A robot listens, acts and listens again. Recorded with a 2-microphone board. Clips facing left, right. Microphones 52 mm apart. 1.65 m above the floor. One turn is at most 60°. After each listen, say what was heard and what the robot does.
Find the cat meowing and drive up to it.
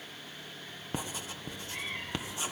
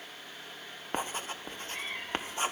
Turn 30° left.
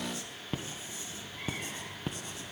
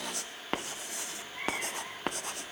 So it is at 30° right. Turn 30° right.
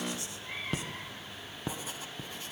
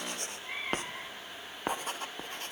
The cat meowing is now 10° right. Turn 10° right.
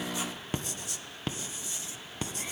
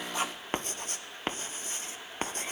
Keep listening.
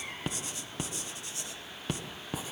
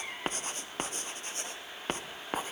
Drive 1.0 m forward.
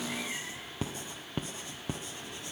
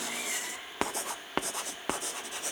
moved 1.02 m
Keep listening.
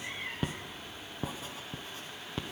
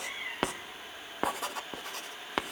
Drive 1.0 m forward.
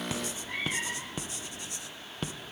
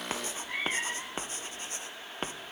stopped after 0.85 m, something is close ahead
I am next to the cat meowing.